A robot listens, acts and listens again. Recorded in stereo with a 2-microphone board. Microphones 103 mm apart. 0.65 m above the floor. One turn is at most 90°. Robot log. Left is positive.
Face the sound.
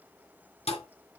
cmd yaw +90
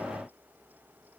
end: Facing where the thud came from. I can't hear it now.